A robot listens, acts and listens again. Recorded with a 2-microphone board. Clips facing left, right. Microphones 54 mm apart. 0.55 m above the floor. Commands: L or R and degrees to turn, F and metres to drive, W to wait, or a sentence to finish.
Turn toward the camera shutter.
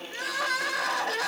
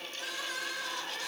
W
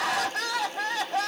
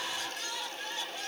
W
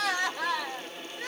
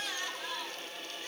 I can't make out a camera shutter to turn to.